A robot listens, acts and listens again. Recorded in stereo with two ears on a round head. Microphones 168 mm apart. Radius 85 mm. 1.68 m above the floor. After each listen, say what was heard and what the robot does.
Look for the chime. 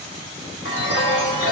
The chime: about 70° left or 110° left. Turn 70° left.
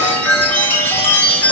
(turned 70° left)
So it is at 10° left. Turn 10° left.
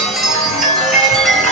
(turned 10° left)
Facing the chime, 2 to 4 m away.